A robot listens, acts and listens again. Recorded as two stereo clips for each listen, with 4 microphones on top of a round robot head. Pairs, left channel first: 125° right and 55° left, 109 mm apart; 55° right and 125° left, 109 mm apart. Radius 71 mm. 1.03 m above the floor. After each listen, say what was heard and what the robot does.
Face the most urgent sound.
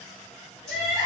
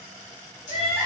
The crying: 10° right. Turn 10° right.
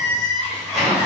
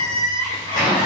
Facing the crying, 1 to 2 m away.